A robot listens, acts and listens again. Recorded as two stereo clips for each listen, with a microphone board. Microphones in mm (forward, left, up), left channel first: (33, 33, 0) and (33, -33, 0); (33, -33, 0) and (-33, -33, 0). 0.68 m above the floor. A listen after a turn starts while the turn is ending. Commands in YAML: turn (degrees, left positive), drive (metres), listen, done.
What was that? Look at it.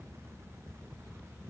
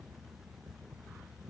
listen: true
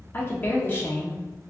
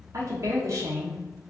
turn: 145
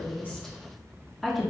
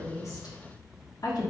done: "Found it: a woman speaking, straight ahead."